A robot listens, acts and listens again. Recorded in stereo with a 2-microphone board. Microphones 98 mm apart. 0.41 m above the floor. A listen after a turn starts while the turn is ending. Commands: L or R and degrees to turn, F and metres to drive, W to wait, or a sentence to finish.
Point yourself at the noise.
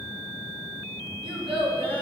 R70
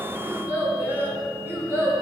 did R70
R25
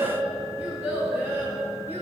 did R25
R20
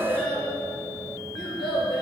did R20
Facing the child speaking, over 4 m away.